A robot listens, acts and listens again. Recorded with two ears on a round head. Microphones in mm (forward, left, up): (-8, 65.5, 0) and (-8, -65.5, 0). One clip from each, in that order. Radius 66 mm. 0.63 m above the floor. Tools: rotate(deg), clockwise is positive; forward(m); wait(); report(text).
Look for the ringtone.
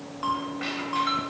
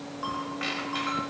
rotate(-30)
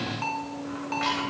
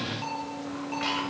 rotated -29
rotate(-145)
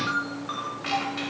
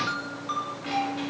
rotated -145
report("Found it: a ringtone, straight ahead, 2 to 4 m away.")